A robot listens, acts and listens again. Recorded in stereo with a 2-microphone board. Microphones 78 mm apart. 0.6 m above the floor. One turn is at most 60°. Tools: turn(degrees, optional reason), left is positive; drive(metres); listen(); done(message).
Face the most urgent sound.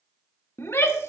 turn(degrees=35, reason="The shout: about 35° left or 145° left.")
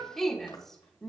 done("Facing the shout, 1 to 2 m away.")